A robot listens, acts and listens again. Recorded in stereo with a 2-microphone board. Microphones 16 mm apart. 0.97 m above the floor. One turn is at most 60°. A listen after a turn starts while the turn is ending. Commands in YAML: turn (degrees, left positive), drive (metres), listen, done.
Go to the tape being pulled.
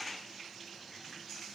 listen: true
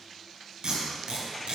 turn: -60
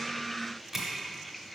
turn: -25
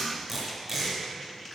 turn: -15
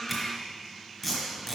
drive: 1.0
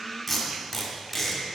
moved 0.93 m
drive: 1.0
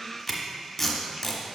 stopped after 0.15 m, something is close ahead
turn: 10
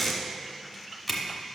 done: "Arrived at the tape being pulled, straight ahead."